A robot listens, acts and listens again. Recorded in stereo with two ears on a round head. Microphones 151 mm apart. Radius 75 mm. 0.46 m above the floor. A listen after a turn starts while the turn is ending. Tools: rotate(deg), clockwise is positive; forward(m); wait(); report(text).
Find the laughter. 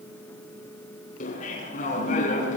rotate(-50)
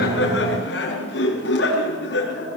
rotate(-80)
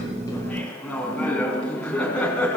report("Found it: laughter, straight ahead.")